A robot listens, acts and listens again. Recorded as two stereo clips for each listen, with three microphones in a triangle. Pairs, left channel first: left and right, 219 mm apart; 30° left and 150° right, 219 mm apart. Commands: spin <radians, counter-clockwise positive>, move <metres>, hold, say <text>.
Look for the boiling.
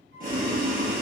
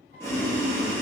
spin -0.79
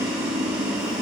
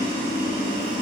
say Facing the boiling, 1 to 2 m away.